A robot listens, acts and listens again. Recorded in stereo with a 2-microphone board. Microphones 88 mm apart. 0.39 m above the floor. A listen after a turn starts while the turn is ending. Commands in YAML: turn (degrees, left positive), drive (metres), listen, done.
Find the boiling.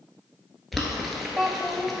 turn: 30
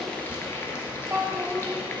turn: 150
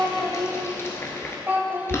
turn: 30
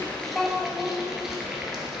done: "Found it: boiling, straight ahead, 1 to 2 m away."